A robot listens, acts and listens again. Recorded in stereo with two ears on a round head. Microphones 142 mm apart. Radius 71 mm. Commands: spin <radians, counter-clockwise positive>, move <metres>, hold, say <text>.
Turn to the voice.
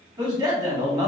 spin -0.44
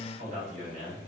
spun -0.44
spin -2.18
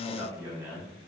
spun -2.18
spin -0.35
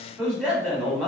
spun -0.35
say Found it: a man speaking, straight ahead.